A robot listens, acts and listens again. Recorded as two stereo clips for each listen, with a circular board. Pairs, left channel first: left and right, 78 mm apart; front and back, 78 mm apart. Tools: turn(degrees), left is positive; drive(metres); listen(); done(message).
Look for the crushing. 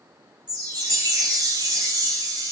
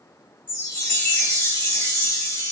listen()
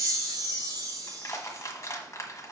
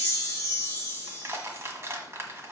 turn(degrees=135)
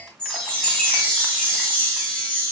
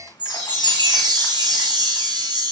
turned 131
listen()
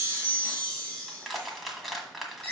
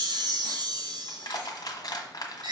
done("Facing the crushing.")